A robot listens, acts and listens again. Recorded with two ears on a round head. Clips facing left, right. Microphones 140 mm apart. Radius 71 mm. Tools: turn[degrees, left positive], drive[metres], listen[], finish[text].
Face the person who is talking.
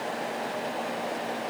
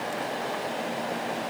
Action: listen[]
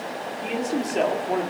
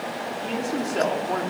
Action: turn[30]
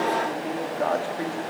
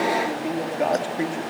Thought: So it is at 20° right.
Action: turn[-20]
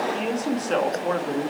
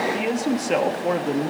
Thought: The man speaking is now 20° right.
Action: turn[-20]
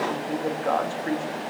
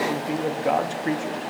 Thought: The man speaking is now 20° right.
Action: turn[-20]
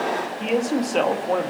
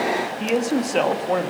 Action: finish[Facing the man speaking.]